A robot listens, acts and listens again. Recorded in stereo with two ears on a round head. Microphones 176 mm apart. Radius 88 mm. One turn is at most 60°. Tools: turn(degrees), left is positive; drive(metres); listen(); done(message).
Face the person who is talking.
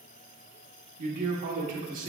turn(degrees=-45)
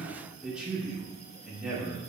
done("Found it: a man speaking, straight ahead.")